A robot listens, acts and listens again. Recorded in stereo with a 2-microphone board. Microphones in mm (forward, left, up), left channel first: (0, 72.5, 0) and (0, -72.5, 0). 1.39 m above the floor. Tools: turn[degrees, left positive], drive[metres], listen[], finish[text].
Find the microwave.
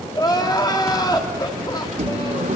Thought: The microwave: about 65° right or 115° right.
Action: turn[-65]
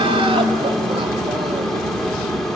Action: finish[Found it: a microwave, straight ahead.]